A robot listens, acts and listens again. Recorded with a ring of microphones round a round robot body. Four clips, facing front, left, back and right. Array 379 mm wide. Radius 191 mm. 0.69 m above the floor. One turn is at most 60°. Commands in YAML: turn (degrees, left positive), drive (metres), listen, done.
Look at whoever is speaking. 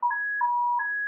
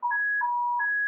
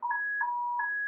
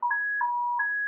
listen: true
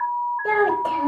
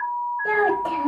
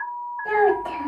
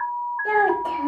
done: "Facing the child speaking."